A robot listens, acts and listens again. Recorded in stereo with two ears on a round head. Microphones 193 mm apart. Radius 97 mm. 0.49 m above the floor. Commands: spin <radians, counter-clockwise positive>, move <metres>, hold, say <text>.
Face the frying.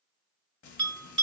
spin 1.22
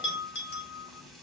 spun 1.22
say Found it: frying, straight ahead.